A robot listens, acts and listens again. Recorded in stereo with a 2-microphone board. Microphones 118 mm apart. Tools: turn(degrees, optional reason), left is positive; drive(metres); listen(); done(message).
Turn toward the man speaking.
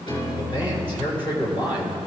turn(degrees=50, reason="The man speaking: about 50° left or 130° left.")
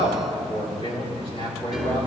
turn(degrees=50, reason="So it is at 50° left.")
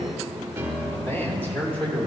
turn(degrees=15, reason="The man speaking is now 15° left.")
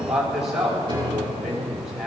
done("Facing the man speaking, over 4 m away.")